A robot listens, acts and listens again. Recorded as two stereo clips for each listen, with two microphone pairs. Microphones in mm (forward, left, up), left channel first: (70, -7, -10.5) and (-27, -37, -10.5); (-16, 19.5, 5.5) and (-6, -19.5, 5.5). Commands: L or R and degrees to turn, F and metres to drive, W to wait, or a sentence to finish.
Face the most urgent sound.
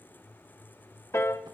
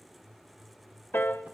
W
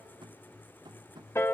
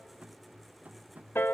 W
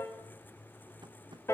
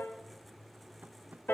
I can't make out anything urgent to turn to.